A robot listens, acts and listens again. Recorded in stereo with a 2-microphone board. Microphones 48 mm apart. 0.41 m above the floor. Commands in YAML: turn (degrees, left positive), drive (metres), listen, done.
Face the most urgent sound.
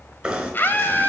turn: 45
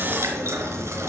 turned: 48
listen: true
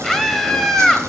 done: "Facing the scream."